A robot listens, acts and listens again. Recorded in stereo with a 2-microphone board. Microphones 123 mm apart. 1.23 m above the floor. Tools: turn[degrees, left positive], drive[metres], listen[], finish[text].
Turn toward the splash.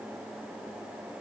Action: listen[]
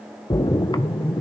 Thought: The splash: about 35° left or 145° left.
Action: turn[35]
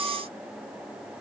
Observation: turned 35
Action: listen[]
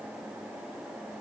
Action: finish[I heard a splash, but can't make it out now. It was about straight ahead or 110° left.]